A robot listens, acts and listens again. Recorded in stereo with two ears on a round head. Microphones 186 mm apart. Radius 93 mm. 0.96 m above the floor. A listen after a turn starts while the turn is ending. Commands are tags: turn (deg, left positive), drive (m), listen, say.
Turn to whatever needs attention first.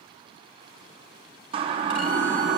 <turn deg="-25"/>
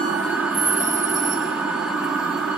<say>Found it: a siren, straight ahead, 2 to 4 m away.</say>